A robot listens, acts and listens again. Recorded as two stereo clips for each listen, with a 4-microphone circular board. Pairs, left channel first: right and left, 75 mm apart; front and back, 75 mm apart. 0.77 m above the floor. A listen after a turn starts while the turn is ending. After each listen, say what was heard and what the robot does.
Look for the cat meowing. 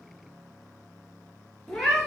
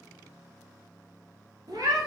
The cat meowing: straight behind. Turn 180° left.
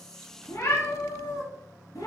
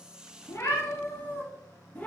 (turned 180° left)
The cat meowing is now 70° right. Turn 70° right.
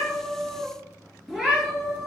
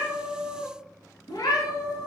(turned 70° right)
Found it: a cat meowing, straight ahead, 1 to 2 m away.